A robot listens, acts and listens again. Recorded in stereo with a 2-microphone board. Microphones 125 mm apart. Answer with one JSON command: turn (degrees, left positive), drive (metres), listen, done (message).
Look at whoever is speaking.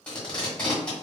{"listen": true}
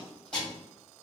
{"listen": true}
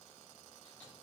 {"done": "I can't make out anyone speaking, only tape being pulled."}